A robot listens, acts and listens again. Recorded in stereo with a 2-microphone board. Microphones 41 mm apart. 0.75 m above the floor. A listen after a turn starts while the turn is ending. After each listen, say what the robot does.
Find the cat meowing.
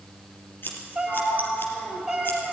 Turn 30° right.
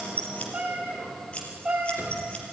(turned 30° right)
Turn 165° right.
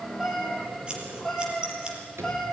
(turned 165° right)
Found it: a cat meowing, straight ahead, over 4 m away.